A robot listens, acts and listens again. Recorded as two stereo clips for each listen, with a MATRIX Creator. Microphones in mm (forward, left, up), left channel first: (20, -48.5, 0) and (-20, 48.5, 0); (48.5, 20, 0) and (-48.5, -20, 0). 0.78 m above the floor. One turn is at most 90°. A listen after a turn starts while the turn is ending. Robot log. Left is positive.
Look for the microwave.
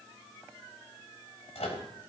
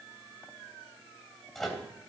note: The microwave: 65° right.
cmd yaw -65
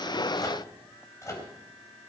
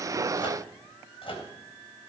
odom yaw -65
note: The microwave is now 10° right.
cmd yaw -10
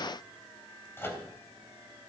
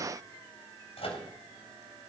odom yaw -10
end: Found it: a microwave, straight ahead.